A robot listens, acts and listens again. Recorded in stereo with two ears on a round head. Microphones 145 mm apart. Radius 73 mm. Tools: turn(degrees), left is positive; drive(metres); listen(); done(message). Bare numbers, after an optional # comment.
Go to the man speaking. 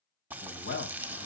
turn(90)
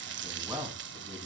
# So it is at 10° right.
turn(-10)
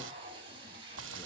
listen()
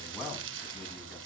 drive(1.0)
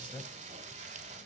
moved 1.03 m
# The man speaking is now 10° left.
turn(10)
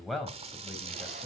drive(1.0)
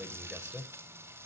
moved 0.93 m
drive(1.0)
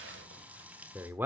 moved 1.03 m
# The man speaking is now 10° right.
turn(-10)
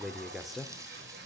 drive(1.0)
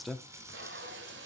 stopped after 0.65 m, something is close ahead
done("Arrived at the man speaking, straight ahead.")